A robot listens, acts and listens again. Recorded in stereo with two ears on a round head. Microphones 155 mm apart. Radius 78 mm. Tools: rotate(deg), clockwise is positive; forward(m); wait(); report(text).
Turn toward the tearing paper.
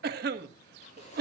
rotate(-40)
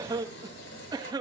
rotate(-100)
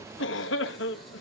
report("Found it: tearing paper, straight ahead, over 4 m away.")